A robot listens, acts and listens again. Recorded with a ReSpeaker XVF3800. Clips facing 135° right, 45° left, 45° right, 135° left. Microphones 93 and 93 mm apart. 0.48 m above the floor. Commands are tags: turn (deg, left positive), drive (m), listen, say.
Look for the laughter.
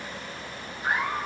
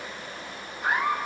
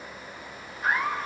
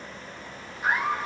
<turn deg="50"/>
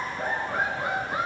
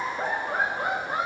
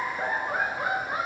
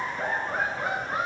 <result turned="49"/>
<turn deg="35"/>
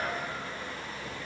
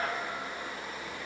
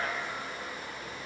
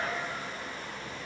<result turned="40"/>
<say>Facing the laughter, 2 to 4 m away.</say>